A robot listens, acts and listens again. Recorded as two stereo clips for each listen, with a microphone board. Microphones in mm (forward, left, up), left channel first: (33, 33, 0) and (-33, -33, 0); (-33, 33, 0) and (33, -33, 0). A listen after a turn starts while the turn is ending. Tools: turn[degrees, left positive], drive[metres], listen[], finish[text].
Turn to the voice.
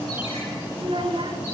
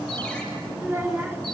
Thought: The child speaking: 115° right.
Action: turn[-115]
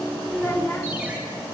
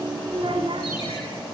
Thought: The child speaking is now 20° right.
Action: turn[-20]
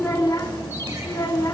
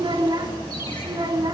Action: finish[Facing the child speaking, 2 to 4 m away.]